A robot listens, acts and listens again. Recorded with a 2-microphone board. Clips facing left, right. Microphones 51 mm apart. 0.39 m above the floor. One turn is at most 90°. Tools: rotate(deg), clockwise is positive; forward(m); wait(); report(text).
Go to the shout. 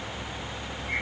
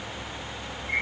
wait()
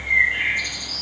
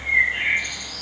wait()
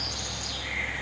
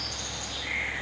report("I can't make out a shout to turn to.")